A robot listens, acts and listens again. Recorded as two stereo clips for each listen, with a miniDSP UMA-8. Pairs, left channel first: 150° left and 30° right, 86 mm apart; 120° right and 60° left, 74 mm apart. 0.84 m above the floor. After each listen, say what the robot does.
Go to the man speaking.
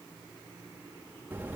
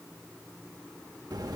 Keep listening.
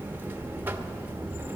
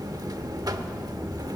Keep listening.
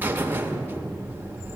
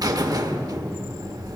I can't make out a man speaking to turn to.